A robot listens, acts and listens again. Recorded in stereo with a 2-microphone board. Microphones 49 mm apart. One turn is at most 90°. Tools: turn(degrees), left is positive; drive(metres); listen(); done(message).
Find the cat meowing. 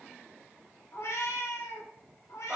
turn(degrees=90)
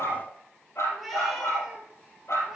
turn(degrees=-10)
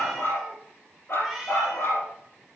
done("Facing the cat meowing, over 4 m away.")